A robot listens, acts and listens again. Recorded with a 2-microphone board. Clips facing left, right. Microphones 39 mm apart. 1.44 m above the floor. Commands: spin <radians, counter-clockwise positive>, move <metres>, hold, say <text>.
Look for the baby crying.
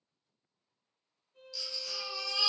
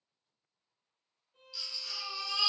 spin -0.35
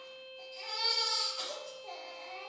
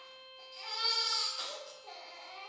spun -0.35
say Found it: a baby crying, straight ahead, under 1 m away.